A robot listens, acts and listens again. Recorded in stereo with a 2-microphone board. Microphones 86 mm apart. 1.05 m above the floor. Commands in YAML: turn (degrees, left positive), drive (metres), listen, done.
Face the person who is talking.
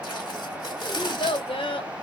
turn: 90
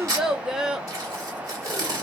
done: "Facing the child speaking, under 1 m away."